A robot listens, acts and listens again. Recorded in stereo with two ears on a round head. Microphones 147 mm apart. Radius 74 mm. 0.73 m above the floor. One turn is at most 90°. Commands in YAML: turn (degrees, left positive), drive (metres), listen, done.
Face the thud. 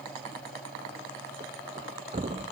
turn: -40
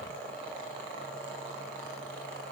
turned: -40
listen: true
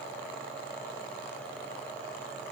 done: "I heard a thud, but can't make it out now. It was about straight ahead or 100° right."